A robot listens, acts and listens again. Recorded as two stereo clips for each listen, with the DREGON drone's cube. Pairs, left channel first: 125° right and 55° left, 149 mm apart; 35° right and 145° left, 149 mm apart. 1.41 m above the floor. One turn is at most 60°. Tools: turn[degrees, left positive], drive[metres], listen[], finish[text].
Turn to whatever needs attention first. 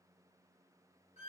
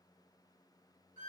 Action: listen[]
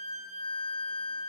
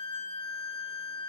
Action: listen[]
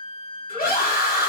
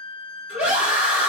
Thought: The scream: 130° right.
Action: turn[-60]
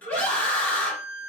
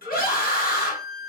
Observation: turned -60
Thought: The scream is now 40° right.
Action: turn[-40]
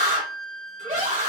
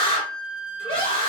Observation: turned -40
Thought: The scream is now 20° left.
Action: turn[20]
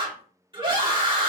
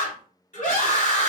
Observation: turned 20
Action: finish[Found it: a scream, straight ahead, 1 to 2 m away.]